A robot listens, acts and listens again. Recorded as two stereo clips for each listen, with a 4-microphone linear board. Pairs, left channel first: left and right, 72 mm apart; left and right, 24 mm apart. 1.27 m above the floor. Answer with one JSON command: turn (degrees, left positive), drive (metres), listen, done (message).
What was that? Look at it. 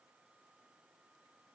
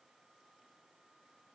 {"listen": true}
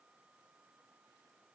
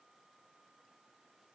{"listen": true}
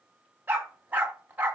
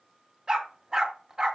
{"turn": -25}
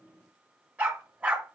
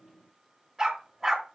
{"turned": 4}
{"turn": -15}
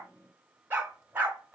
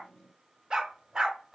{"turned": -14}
{"turn": -25}
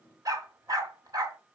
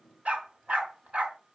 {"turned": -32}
{"turn": -125}
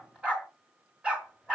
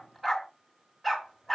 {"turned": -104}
{"turn": -15}
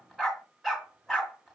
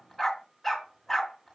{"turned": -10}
{"done": "Found it: a dog barking, straight ahead."}